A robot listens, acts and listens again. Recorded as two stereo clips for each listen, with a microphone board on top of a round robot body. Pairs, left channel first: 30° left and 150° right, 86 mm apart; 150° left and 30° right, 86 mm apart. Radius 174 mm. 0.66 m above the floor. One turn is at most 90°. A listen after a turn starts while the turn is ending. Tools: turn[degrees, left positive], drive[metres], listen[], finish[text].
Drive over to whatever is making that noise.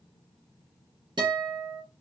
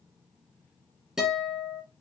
Thought: The guitar: 115° right.
Action: turn[-90]
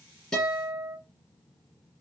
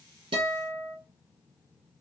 Thought: The guitar is now 20° right.
Action: turn[-20]
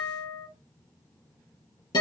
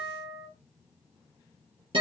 Action: drive[1.0]
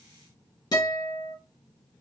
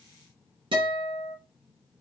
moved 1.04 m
Thought: The guitar is now 10° right.
Action: turn[-10]
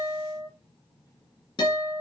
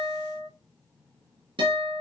Action: drive[1.0]
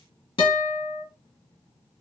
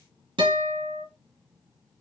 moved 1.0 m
Action: drive[1.0]
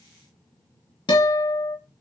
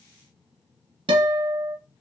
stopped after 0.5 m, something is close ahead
Action: finish[I am next to the guitar.]